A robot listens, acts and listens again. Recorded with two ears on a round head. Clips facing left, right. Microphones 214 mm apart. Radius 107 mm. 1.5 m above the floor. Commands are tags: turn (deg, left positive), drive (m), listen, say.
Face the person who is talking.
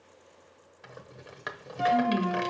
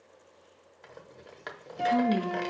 <turn deg="-60"/>
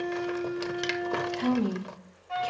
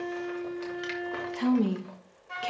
<turn deg="-60"/>
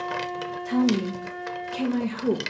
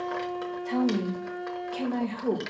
<turn deg="10"/>
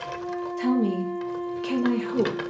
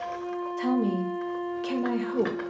<say>Facing the woman speaking, 1 to 2 m away.</say>